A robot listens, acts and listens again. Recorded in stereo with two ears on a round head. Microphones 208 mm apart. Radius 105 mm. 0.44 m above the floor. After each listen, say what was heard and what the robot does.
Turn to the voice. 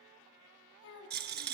The child speaking: about 65° left or 115° left. Turn 65° left.
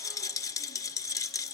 Keep listening.
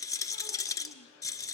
Keep listening.
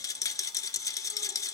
I heard a child speaking, but can't make it out now. It was about straight ahead or 50° left.